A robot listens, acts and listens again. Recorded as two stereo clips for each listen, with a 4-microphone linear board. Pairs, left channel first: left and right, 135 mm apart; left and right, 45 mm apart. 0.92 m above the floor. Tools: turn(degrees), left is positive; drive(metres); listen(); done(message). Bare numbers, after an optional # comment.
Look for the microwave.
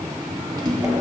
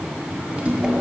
# The microwave: about 30° right or 150° right.
turn(-30)
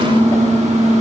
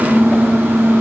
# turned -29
# So it is at 120° right.
turn(-120)
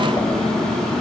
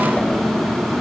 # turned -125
done("Facing the microwave.")